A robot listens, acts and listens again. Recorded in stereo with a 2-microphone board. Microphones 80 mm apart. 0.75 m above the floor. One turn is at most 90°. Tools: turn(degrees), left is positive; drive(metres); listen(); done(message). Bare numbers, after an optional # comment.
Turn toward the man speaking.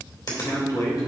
# The man speaking: about 50° left or 130° left.
turn(50)
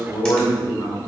# So it is at 60° left.
turn(60)
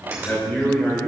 # The man speaking is now 20° left.
turn(20)
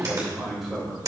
done("Facing the man speaking, 2 to 4 m away.")